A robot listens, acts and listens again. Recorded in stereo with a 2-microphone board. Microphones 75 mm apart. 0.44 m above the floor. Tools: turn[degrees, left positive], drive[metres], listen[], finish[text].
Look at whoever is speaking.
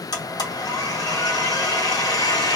Action: listen[]
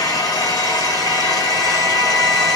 Action: listen[]
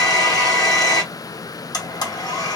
Action: finish[I can't make out anyone speaking to turn to.]